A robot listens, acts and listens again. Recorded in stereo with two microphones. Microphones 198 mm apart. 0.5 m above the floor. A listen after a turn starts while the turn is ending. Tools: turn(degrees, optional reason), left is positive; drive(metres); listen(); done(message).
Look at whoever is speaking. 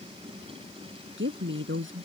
turn(degrees=-90)
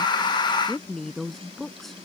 done("Found it: a woman speaking, straight ahead.")